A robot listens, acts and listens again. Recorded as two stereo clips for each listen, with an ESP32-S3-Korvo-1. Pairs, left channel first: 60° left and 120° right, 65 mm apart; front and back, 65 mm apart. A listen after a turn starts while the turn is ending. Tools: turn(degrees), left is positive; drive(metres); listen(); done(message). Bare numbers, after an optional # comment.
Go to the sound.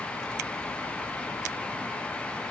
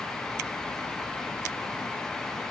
listen()
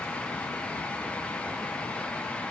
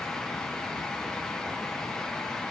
listen()
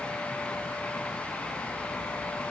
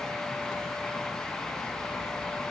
done("I can't make out anything.")